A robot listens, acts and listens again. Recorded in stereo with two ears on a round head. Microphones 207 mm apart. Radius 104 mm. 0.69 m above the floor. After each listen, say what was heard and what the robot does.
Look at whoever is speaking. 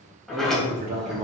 The man speaking: about 30° right or 150° right. Turn 30° right.
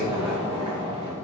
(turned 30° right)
Keep listening.
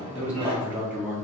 So it is at 10° right. Turn 10° right.
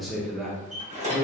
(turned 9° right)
Found it: a man speaking, straight ahead, under 1 m away.